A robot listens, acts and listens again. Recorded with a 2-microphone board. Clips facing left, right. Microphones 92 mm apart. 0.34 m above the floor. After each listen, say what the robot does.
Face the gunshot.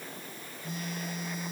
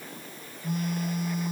Keep listening.
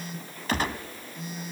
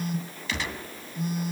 Turn 45° left.
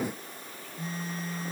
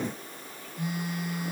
Keep listening.
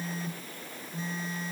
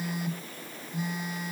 I heard a gunshot, but can't make it out now. It was about straight ahead or 90° left.